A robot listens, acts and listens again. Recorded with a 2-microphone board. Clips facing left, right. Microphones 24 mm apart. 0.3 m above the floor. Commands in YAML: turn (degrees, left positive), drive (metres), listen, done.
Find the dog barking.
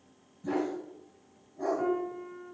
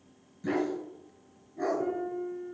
turn: -65
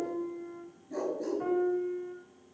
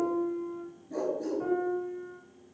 done: "Facing the dog barking."